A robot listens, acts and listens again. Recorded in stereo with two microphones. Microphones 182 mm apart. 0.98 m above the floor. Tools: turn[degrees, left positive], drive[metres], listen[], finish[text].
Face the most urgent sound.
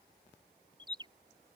Action: listen[]
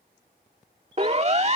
Thought: The siren: about 40° right or 140° right.
Action: turn[-40]
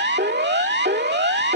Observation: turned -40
Thought: So it is at 100° right.
Action: turn[-100]
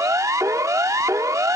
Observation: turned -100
Thought: The siren is now 20° right.
Action: turn[-20]
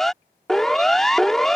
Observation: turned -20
Action: finish[Found it: a siren, straight ahead.]